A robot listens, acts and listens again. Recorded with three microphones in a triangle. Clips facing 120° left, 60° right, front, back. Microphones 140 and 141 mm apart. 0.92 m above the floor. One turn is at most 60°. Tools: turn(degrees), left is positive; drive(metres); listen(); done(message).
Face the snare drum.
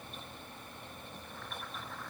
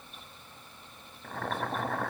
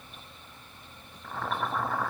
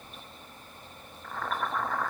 listen()
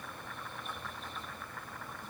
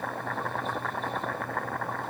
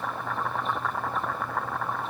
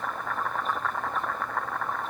listen()
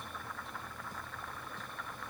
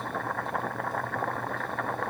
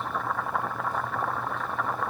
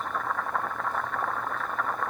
done("I can't make out a snare drum, only boiling.")